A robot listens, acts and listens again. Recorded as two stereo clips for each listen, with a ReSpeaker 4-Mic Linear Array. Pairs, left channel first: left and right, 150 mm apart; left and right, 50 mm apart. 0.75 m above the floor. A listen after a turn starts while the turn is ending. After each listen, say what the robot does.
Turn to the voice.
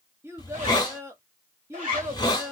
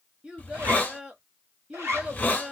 Turn 20° right.
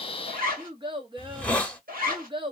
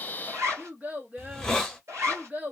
Turn 140° right.
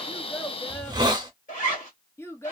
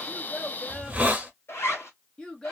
Turn 20° left.
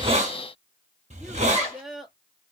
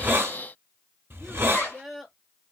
Found it: a child speaking, straight ahead, under 1 m away.